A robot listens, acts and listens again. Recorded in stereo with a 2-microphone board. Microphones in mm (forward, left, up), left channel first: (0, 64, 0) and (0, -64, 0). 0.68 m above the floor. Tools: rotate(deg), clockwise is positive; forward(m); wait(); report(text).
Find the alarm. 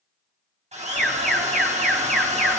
rotate(-30)
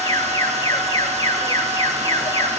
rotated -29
rotate(-150)
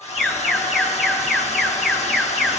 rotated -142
report("Facing the alarm, 1 to 2 m away.")